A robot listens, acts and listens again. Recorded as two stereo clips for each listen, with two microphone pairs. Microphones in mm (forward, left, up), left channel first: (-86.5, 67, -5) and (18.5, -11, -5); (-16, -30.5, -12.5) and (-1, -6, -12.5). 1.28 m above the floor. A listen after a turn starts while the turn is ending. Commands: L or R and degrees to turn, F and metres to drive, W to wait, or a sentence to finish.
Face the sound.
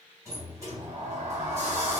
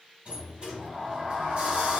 L25
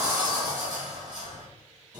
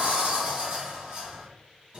L10
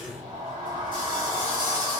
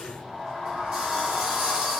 Facing the sliding door, 1 to 2 m away.